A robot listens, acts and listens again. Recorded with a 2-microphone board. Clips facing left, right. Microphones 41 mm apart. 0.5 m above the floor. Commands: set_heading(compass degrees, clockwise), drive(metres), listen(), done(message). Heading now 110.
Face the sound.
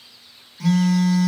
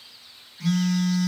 set_heading(40)
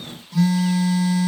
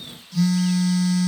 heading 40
set_heading(15)
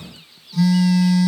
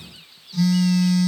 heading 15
set_heading(5)
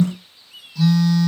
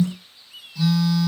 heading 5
done("Facing the phone buzzing, 1 to 2 m away.")